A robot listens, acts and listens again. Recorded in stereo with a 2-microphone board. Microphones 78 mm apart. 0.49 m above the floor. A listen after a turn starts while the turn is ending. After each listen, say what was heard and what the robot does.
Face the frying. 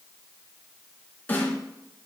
Keep listening.
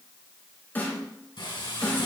Turn 90° left.
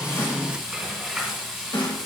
Found it: frying, straight ahead.